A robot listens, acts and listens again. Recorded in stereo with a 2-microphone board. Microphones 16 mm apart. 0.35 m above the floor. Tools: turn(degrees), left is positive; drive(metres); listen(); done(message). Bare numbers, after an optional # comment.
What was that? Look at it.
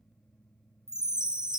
# The chime: about 60° right or 120° right.
turn(-60)
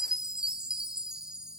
# So it is at 65° right.
turn(-65)
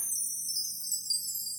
done("Found it: a chime, straight ahead, under 1 m away.")